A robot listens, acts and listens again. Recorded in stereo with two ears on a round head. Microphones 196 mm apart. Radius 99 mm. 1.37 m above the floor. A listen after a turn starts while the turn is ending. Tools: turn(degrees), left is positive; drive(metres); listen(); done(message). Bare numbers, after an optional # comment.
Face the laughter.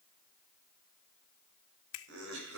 # The laughter: about 65° right or 115° right.
turn(-65)
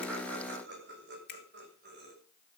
# So it is at 50° right.
turn(-50)
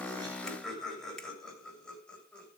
done("Facing the laughter.")